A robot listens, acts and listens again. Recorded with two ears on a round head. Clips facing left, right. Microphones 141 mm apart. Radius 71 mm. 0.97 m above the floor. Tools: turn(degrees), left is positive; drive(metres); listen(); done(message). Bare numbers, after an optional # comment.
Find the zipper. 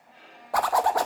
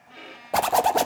# The zipper: about 30° right or 150° right.
turn(-30)
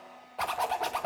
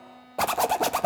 # So it is at 120° right.
turn(-120)
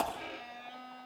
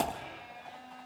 # The zipper is now 10° right.
turn(-10)
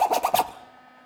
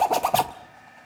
done("Found it: a zipper, straight ahead, under 1 m away.")